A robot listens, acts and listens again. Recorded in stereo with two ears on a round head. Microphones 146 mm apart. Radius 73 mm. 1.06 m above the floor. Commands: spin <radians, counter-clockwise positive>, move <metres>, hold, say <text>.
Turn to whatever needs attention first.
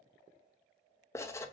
hold
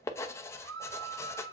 spin -1.57
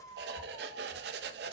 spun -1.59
spin 0.26
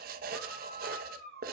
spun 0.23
say Facing the scream.